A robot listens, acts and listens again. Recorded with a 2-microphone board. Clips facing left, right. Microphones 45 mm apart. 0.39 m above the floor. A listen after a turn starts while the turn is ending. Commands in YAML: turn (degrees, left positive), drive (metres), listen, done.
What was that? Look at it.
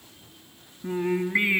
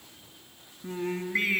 turn: 20
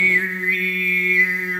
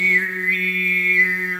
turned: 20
done: "Found it: singing, straight ahead."